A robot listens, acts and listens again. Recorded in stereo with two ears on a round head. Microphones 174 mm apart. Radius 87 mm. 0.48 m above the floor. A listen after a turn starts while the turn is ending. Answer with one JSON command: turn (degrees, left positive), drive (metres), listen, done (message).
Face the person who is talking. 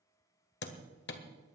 {"listen": true}
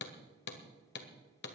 {"listen": true}
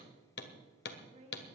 {"turn": -35}
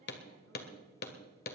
{"listen": true}
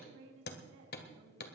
{"turn": -110}
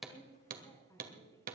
{"turn": 15}
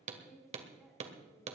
{"done": "Found it: a woman speaking, straight ahead."}